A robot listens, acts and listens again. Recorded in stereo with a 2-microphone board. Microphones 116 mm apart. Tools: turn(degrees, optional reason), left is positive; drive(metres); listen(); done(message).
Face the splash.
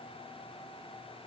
listen()
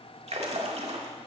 turn(degrees=-65, reason="The splash: about 65° right or 115° right.")
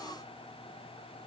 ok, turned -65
listen()
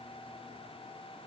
done("I heard a splash, but can't make it out now. It was about straight ahead or 50° right.")